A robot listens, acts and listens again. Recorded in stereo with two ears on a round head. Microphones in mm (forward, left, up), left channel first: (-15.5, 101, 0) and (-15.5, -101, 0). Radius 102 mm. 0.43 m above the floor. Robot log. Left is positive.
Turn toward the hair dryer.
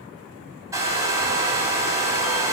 cmd yaw -30
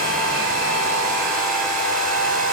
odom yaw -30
note: So it is at 135° right.
cmd yaw -135
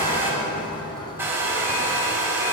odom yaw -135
note: The hair dryer is now 10° right.
cmd yaw -10
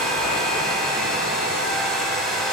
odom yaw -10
end: Facing the hair dryer, 2 to 4 m away.